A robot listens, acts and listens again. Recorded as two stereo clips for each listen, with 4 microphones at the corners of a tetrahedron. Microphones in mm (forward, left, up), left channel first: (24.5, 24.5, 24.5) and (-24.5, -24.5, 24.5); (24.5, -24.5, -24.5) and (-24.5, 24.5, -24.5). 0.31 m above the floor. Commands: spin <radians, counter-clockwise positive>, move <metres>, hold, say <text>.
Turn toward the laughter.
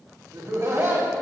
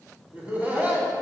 spin -2.79
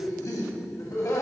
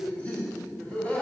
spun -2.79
spin 0.35
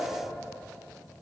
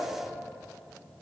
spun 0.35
hold
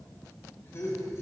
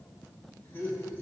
say Found it: laughter, straight ahead, 1 to 2 m away.